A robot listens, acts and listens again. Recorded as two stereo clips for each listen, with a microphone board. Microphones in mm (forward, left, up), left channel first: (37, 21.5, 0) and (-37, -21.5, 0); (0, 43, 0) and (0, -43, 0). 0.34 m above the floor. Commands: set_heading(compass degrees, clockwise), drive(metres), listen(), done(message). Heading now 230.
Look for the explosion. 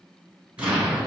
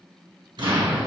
set_heading(300)
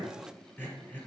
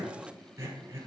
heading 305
done("Facing where the explosion came from. I can't hear it now.")